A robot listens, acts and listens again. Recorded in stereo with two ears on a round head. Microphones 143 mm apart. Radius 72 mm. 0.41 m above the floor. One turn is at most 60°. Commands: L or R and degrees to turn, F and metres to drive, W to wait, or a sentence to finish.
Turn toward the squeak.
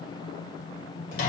W
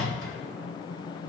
W
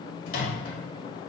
I can't make out a squeak, only a microwave.